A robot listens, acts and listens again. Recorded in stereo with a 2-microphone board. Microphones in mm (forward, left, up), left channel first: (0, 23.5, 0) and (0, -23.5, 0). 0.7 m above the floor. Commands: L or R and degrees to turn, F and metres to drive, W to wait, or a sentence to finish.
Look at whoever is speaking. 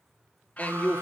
L30
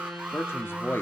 L115
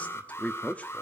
L35
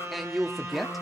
Found it: a man speaking, straight ahead.